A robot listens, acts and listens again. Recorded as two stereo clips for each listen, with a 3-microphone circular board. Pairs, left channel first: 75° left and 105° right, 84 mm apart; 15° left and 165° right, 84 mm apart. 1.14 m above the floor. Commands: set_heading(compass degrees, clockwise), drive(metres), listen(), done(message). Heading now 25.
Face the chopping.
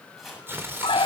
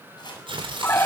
set_heading(40)
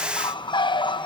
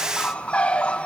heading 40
listen()
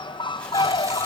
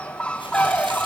listen()
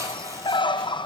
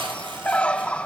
done("Facing where the chopping came from. I can't hear it now.")